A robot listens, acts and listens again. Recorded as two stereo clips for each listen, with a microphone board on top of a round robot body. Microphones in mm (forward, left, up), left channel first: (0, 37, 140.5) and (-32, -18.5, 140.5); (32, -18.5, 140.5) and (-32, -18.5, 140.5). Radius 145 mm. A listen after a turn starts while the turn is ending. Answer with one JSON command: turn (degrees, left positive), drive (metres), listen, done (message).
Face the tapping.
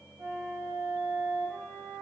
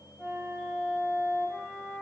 {"listen": true}
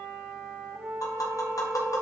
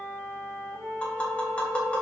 {"turn": 70}
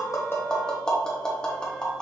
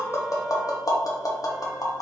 {"turn": -15}
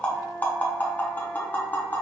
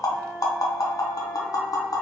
{"done": "Facing the tapping, 1 to 2 m away."}